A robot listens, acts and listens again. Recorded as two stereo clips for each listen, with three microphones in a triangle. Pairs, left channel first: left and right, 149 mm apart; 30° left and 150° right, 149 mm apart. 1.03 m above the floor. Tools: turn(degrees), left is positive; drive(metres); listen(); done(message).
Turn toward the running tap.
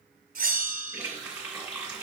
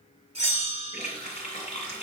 turn(degrees=-10)
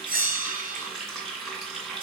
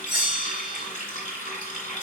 done("Found it: a running tap, straight ahead, 2 to 4 m away.")